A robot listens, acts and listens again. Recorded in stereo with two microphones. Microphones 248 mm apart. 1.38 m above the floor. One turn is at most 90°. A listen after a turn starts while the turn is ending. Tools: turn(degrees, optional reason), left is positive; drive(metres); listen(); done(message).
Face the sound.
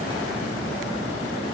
listen()
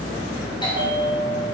turn(degrees=20, reason="The bell: about 20° left or 160° left.")
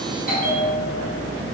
turn(degrees=90, reason="So it is at 145° left.")
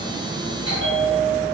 turn(degrees=90, reason="The bell is now 90° left.")
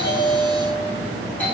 done("Found it: a bell, straight ahead.")